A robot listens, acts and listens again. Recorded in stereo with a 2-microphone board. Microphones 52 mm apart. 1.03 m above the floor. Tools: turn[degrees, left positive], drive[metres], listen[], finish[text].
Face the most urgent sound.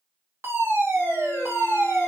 Thought: The fire alarm: about 55° right or 125° right.
Action: turn[-55]
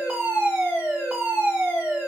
Thought: So it is at 25° right.
Action: turn[-25]
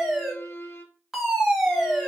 Action: finish[Found it: a fire alarm, straight ahead, 1 to 2 m away.]